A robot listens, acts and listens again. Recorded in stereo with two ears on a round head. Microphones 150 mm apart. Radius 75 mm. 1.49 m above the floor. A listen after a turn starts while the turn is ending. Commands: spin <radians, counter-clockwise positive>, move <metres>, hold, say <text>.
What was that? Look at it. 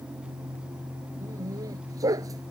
spin -0.35
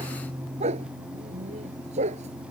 spin -2.44
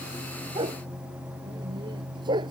spin -0.44
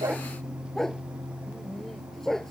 say Found it: a dog barking, straight ahead.